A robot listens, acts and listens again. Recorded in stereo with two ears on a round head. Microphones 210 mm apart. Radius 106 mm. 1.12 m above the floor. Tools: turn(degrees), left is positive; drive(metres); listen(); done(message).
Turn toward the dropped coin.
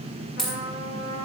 turn(degrees=30)
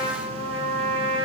listen()
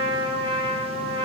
done("I heard a dropped coin, but can't make it out now. It was about 30° right or 150° left.")